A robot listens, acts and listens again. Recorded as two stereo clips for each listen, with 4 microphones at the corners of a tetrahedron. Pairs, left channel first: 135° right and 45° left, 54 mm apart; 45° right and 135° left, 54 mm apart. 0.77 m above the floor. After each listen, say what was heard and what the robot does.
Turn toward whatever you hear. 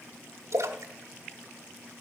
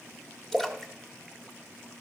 The splash: 40° left. Turn 40° left.
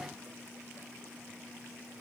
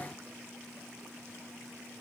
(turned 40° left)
I heard a splash from this way, but can't make it out now.